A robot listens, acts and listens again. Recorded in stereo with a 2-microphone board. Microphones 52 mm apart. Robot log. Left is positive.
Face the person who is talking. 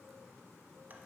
cmd idle
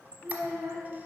note: The child speaking: about 65° right or 115° right.
cmd yaw -65
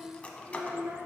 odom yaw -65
note: So it is at 50° right.
cmd yaw -50
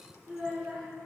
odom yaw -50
note: The child speaking is now 10° right.
cmd yaw -10
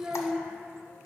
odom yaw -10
end: Found it: a child speaking, straight ahead, 2 to 4 m away.